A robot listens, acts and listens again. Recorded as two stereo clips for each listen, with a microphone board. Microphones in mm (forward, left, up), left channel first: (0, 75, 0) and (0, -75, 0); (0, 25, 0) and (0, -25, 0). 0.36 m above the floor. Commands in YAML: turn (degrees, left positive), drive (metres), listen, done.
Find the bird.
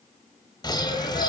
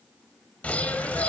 turn: 30
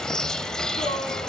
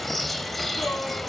done: "Facing the bird, 1 to 2 m away."